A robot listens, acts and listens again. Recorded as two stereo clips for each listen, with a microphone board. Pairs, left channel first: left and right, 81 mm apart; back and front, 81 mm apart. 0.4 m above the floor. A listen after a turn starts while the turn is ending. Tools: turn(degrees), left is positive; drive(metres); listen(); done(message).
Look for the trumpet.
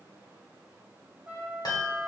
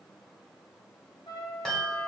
turn(degrees=-155)
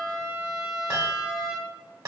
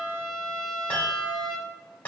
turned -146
turn(degrees=-10)
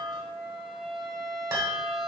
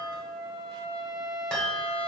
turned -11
done("Found it: a trumpet, straight ahead.")